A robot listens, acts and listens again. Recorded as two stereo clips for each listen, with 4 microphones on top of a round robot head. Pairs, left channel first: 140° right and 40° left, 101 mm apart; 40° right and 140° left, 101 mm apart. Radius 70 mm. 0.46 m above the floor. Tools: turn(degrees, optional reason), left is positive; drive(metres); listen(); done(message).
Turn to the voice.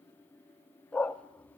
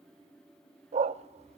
listen()
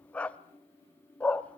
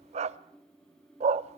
listen()
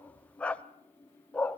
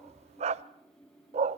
done("I can't make out anyone speaking, only a dog barking.")